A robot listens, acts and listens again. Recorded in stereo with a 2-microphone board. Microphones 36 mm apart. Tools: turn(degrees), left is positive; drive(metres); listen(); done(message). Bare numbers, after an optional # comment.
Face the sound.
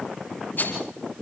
# The rattle: about 55° left or 125° left.
turn(55)
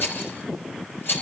# So it is at 70° left.
turn(70)
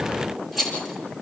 done("Found it: a rattle, straight ahead.")